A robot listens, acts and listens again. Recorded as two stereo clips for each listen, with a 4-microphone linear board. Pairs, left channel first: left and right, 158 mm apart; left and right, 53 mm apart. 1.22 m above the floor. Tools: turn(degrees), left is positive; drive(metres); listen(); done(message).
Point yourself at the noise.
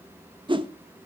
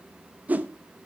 turn(degrees=-30)
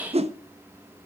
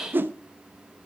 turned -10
turn(degrees=-40)
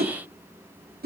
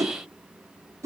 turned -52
turn(degrees=-85)
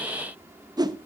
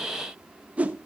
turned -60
turn(degrees=-25)
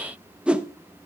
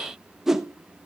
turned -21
done("Facing the whoosh, under 1 m away.")